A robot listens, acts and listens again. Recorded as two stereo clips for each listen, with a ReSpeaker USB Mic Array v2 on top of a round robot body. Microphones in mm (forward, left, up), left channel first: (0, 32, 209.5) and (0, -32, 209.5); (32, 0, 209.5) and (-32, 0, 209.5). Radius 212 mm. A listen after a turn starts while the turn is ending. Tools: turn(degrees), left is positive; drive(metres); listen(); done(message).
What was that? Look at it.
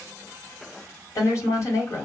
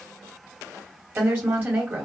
turn(degrees=120)
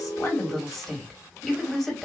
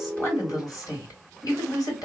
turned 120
done("Facing the woman speaking.")